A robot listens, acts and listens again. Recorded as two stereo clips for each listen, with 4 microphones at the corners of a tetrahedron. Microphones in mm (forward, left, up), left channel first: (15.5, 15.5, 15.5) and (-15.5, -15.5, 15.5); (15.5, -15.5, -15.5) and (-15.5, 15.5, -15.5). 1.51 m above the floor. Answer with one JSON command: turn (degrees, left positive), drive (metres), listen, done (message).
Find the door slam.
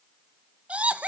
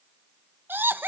{"listen": true}
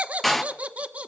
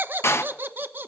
{"turn": -40}
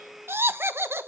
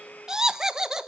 {"done": "Facing where the door slam came from. I can't hear it now."}